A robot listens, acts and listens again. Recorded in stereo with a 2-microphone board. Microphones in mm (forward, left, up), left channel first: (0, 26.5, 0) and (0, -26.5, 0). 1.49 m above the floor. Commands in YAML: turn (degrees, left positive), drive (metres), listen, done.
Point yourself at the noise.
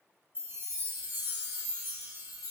turn: -35
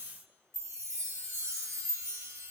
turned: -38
turn: -100
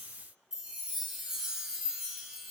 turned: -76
turn: -25
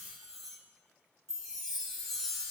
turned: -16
turn: -10
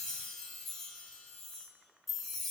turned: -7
done: "Found it: a chime, straight ahead, 1 to 2 m away."